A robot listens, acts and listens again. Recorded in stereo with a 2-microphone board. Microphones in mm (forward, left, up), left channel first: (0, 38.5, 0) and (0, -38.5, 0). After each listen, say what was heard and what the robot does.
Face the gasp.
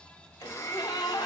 Turn 90° left.
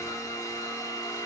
I heard a gasp from this way, but can't make it out now.